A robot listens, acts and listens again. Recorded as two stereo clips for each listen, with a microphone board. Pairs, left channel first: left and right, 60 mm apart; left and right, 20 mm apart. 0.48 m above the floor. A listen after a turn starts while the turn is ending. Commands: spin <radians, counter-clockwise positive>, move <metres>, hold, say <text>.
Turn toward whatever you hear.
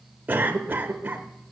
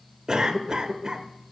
spin -0.52
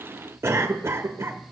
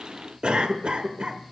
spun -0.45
spin -2.01
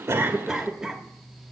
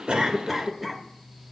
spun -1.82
spin -0.26
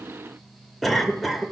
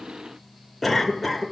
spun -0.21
say Found it: a cough, straight ahead.